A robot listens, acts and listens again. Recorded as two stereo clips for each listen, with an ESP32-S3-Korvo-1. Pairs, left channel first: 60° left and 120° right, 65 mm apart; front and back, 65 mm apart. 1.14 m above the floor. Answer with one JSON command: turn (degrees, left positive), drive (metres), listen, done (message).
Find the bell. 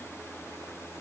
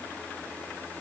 {"listen": true}
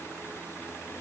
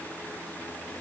{"listen": true}
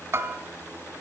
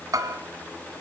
{"turn": -165}
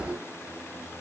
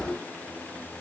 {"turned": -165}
{"listen": true}
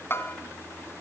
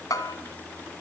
{"turn": 10}
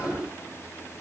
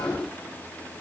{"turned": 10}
{"listen": true}
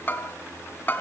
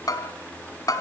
{"done": "Found it: a bell, straight ahead."}